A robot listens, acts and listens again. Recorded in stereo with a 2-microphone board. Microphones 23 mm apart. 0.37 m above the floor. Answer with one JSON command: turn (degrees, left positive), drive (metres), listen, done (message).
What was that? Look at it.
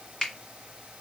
{"turn": 40}
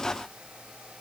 {"listen": true}
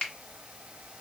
{"turn": 100}
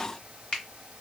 {"turn": 20}
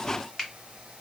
{"done": "Found it: a finger snap, straight ahead, 1 to 2 m away."}